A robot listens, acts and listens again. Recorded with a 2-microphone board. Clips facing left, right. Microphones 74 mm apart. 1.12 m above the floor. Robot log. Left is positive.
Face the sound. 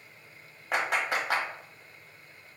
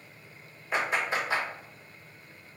note: The clap: about 70° left or 110° left.
cmd yaw +70
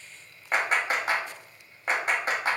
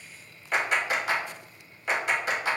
note: So it is at 40° left.
cmd yaw +40
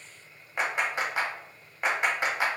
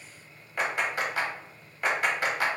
note: The clap is now 20° left.
cmd yaw +20
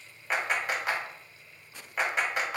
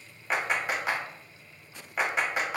end: Found it: a clap, straight ahead.